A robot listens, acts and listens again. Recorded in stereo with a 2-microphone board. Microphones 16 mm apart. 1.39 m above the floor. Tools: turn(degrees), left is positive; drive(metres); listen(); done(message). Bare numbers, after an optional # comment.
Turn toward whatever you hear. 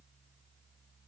listen()
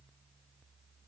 listen()
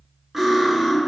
# The cutlery clinking: about 15° right or 165° right.
turn(-15)
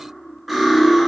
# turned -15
done("Found it: cutlery clinking, straight ahead, 1 to 2 m away.")